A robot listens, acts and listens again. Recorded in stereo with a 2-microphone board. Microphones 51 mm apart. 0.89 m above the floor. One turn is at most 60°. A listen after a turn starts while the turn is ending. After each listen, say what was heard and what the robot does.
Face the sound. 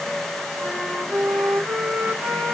The flute: about 40° right or 140° right. Turn 40° right.
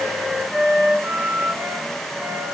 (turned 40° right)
So it is at 100° right. Turn 60° right.
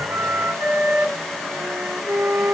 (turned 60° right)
The flute is now 45° right. Turn 45° right.
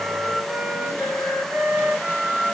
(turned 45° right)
Found it: a flute, straight ahead.